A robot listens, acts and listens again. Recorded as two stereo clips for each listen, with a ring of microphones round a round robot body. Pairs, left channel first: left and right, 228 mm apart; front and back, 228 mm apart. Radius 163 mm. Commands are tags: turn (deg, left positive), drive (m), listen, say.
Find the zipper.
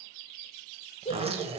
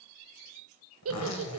<turn deg="-25"/>
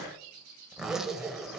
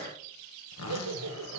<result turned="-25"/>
<say>Facing the zipper.</say>